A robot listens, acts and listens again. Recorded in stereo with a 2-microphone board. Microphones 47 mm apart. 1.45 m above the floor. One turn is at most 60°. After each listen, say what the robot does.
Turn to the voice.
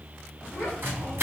Turn 35° left.
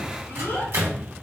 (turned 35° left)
Turn 60° left.
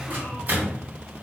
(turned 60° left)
Turn 50° left.
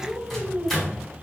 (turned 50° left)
Turn 20° left.
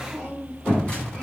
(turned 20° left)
Facing the child speaking.